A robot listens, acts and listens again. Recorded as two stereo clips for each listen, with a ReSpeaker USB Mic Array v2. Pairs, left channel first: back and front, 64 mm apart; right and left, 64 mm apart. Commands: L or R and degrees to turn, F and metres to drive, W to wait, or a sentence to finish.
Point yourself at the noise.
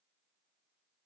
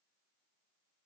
W
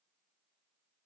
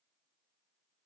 W
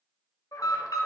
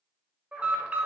L160
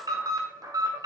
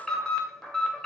Facing the alarm, 1 to 2 m away.